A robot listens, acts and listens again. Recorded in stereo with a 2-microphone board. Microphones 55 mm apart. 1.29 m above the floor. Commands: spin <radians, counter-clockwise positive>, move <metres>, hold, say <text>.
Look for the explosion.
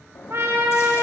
spin 0.96
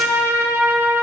hold
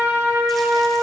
say I heard an explosion, but can't make it out now. It was about straight ahead or 70° left.